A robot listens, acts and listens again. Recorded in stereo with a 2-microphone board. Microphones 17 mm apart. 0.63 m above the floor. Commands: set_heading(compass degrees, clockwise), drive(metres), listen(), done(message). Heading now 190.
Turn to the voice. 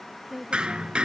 set_heading(205)
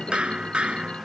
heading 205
listen()
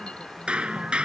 listen()
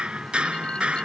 done("I heard a woman speaking, but can't make it out now. It was about straight ahead or 150° right.")